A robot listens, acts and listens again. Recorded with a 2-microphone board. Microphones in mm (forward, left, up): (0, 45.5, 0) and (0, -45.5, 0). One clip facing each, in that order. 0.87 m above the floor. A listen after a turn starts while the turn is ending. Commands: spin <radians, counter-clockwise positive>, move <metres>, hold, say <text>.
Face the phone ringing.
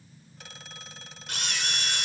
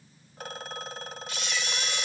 spin -0.87
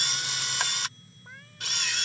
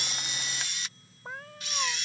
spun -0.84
hold
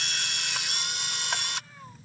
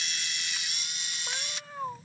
hold
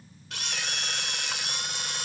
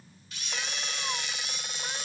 say I heard a phone ringing, but can't make it out now. It was about straight ahead or 85° right.